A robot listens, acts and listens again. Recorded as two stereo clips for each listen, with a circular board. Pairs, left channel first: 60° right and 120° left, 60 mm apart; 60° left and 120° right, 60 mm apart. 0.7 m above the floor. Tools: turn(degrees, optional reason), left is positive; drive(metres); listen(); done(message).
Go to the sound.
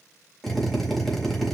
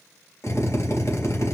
turn(degrees=30, reason="The drill: 30° left.")
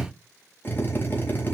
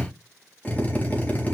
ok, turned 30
drive(metres=1.0)
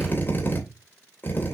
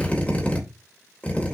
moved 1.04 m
drive(metres=1.0)
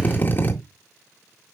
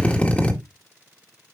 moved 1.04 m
drive(metres=1.0)
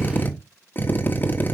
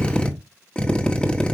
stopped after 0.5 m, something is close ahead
turn(degrees=-10, reason="The drill is now 10° right.")
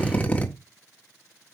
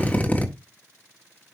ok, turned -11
done("Arrived at the drill, straight ahead.")